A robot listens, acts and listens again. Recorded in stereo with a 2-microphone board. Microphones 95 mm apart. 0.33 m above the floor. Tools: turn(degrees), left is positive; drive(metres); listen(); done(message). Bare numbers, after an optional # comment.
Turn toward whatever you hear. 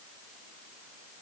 listen()
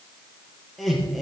turn(30)
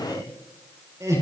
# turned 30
# So it is at 35° right.
turn(-35)
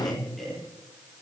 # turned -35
done("Found it: laughter, straight ahead, over 4 m away.")